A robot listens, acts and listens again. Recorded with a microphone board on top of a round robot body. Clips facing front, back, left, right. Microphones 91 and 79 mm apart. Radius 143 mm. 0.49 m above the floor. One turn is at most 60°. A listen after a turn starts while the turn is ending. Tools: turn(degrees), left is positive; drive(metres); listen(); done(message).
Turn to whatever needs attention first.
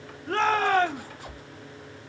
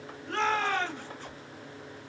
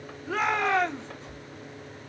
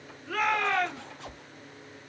turn(degrees=25)
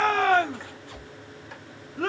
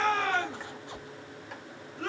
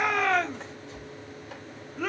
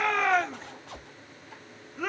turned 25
done("Found it: a shout, straight ahead, 1 to 2 m away.")